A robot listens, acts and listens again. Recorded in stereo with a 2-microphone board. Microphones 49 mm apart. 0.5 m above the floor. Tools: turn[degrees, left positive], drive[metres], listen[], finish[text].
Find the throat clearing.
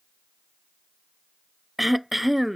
Action: turn[-30]
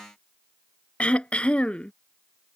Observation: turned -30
Thought: So it is at 25° left.
Action: turn[25]
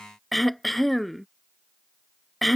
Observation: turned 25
Action: finish[Found it: throat clearing, straight ahead.]